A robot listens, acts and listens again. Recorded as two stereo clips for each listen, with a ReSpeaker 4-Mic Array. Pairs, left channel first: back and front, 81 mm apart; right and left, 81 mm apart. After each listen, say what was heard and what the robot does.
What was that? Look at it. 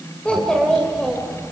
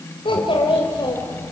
The child speaking: 90° right. Turn 90° right.
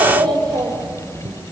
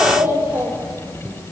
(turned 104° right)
The child speaking is now 35° left. Turn 35° left.
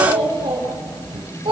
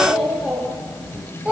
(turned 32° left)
The child speaking is now 15° left. Turn 15° left.
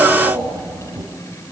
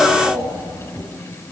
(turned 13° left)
The child speaking is now 10° left. Turn 10° left.
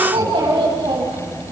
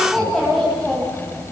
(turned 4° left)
Facing the child speaking, over 4 m away.